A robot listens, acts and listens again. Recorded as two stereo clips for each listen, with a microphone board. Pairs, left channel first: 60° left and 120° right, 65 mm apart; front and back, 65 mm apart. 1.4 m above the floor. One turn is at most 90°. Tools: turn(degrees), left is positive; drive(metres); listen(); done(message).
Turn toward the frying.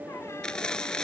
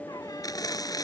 turn(degrees=-20)
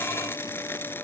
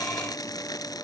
done("Found it: frying, straight ahead.")